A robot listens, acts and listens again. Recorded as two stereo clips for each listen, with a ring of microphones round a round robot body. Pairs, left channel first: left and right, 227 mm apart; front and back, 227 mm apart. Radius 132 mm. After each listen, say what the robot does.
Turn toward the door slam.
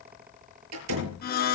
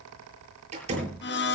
Turn 115° right.
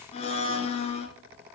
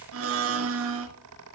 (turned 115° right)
Facing where the door slam came from. I can't hear it now.